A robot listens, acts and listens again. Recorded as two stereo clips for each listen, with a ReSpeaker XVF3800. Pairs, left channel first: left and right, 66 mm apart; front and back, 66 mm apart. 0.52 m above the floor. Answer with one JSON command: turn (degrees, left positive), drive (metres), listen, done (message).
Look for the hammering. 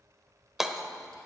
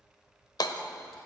{"done": "Facing the hammering, under 1 m away."}